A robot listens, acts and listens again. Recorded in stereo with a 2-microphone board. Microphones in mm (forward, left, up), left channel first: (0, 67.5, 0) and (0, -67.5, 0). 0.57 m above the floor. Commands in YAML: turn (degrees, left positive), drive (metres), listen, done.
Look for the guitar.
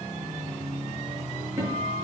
turn: -20
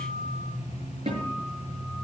turn: -135
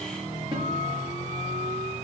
turn: -35
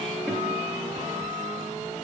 listen: true
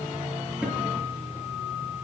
turn: -10
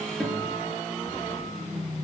listen: true
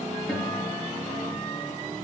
done: "Found it: a guitar, straight ahead."